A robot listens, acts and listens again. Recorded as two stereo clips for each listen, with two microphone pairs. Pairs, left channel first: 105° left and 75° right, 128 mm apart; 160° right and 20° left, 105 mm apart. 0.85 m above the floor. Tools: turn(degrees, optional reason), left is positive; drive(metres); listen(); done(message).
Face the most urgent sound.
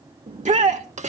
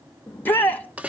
turn(degrees=-90, reason="The shout: 90° right.")
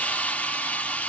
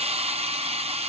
listen()
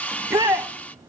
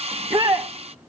turn(degrees=-10, reason="The shout is now 10° right.")
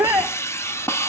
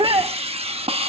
done("Found it: a shout, straight ahead.")